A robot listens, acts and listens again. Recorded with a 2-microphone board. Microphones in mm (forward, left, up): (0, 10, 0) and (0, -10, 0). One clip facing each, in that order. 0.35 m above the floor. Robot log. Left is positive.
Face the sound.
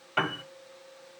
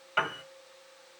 cmd yaw -30
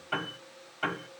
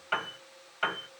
note: So it is at 145° right.
cmd yaw -145
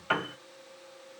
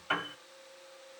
note: The piano is now 25° left.
cmd yaw +25
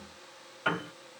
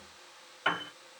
note: The piano is now 10° right.
cmd yaw -10
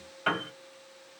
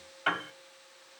end: Facing the piano.